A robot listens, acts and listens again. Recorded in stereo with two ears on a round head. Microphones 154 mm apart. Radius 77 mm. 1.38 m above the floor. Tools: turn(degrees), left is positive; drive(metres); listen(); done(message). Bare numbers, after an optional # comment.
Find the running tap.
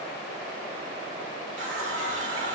turn(-90)
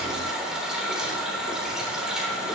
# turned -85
done("Facing the running tap, 2 to 4 m away.")